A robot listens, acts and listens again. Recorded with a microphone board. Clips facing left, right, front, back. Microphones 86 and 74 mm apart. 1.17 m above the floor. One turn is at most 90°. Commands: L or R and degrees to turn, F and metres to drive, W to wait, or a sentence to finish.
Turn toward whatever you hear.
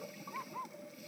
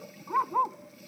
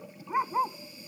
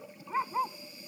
R75
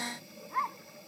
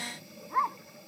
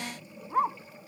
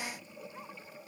R20
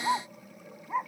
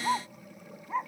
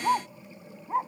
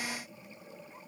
Facing the dog barking.